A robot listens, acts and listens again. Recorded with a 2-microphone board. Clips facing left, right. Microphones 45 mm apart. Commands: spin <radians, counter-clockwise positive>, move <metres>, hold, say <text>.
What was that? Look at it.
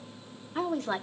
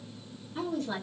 spin 1.05
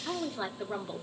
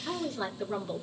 spin 0.26
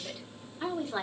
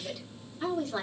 spin 0.35
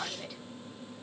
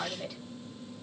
say Found it: a woman speaking, straight ahead, 2 to 4 m away.